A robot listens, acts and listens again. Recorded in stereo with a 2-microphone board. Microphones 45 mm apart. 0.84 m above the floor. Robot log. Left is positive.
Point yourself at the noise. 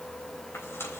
note: The tearing paper: about 65° left or 115° left.
cmd yaw +65
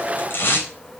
note: So it is at 50° left.
cmd yaw +50
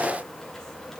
cmd idle
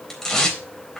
note: The tearing paper is now 10° left.
cmd yaw +10
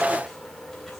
cmd idle
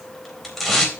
end: Found it: tearing paper, straight ahead.